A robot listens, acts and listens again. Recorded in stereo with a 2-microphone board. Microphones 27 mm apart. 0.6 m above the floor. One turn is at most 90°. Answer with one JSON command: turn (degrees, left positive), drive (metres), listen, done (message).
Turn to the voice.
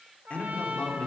{"turn": 55}
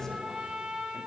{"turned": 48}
{"listen": true}
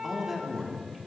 {"turn": -20}
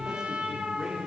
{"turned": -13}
{"turn": -30}
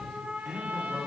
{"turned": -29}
{"turn": -25}
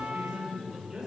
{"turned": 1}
{"turn": -25}
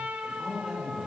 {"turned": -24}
{"done": "Found it: a man speaking, straight ahead, 2 to 4 m away."}